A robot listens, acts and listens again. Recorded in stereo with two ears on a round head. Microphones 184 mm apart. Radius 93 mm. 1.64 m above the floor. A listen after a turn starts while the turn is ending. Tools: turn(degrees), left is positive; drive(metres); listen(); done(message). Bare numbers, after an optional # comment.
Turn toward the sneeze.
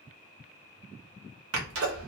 turn(-90)
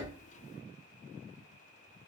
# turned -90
done("I heard a sneeze from this way, but can't make it out now.")